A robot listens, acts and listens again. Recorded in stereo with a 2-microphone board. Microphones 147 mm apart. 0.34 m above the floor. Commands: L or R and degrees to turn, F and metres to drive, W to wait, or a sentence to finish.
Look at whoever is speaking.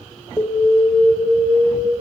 W
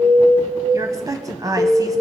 R25
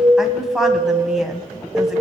Facing the woman speaking, 1 to 2 m away.